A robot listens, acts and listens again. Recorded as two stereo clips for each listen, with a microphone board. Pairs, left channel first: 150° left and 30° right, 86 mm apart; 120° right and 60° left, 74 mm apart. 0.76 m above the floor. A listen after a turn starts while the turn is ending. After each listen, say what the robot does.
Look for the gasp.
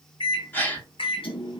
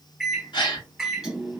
Turn 140° right.
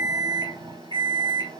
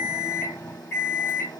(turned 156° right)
Turn 15° left.
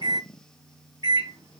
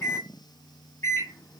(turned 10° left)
I heard a gasp from this way, but can't make it out now.